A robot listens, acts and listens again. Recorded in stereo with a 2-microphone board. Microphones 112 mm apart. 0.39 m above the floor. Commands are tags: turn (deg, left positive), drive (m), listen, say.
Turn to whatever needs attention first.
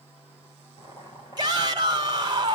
<turn deg="-40"/>
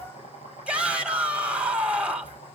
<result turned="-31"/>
<turn deg="-10"/>
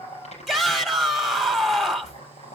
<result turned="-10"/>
<say>Found it: a shout, straight ahead.</say>